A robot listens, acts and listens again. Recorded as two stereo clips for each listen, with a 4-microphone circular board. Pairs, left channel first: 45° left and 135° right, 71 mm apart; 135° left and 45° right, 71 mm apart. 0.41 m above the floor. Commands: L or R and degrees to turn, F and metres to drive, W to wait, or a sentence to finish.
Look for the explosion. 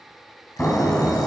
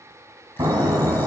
R20
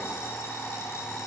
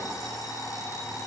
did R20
Facing where the explosion came from. I can't hear it now.